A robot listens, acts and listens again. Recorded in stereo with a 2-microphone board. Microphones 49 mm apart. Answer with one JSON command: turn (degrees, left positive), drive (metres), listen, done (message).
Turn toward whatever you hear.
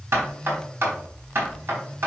{"turn": -55}
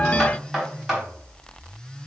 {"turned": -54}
{"done": "Found it: knocking, straight ahead, 2 to 4 m away."}